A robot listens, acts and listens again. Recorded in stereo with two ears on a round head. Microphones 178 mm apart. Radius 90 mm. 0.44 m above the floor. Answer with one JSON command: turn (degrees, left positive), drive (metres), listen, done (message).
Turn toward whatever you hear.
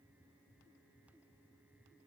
{"listen": true}
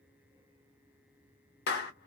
{"turn": 55}
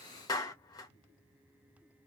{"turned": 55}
{"turn": 25}
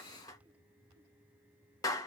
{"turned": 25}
{"turn": 20}
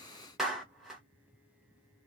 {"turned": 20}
{"done": "Facing the clap."}